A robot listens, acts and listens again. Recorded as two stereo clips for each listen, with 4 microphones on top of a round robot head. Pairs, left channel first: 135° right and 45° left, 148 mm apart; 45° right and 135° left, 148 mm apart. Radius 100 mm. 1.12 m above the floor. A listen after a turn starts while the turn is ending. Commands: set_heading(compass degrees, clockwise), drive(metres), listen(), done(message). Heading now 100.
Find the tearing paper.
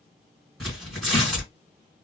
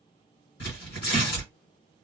set_heading(150)
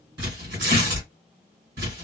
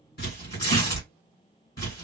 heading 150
set_heading(130)
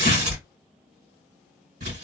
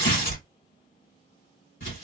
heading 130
done("Facing the tearing paper, 2 to 4 m away.")